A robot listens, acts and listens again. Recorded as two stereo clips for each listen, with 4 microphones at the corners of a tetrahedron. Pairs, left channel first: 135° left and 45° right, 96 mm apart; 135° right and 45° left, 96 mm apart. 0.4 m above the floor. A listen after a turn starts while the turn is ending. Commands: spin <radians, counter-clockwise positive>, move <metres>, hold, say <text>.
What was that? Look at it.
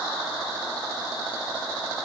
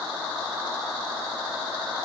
hold
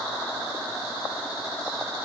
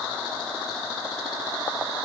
hold
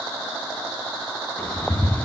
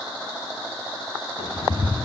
spin -2.62
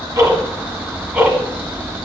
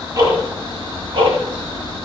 spin 0.52
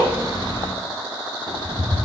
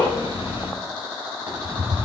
spin -0.26
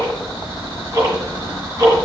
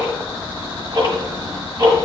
say Found it: ticking, straight ahead.